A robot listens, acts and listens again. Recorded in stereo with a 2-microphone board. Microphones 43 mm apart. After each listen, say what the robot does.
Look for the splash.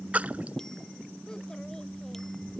Turn 40° right.
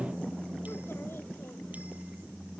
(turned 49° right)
Keep listening.
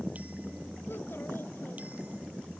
I heard a splash, but can't make it out now. It was about 10° left or 95° right.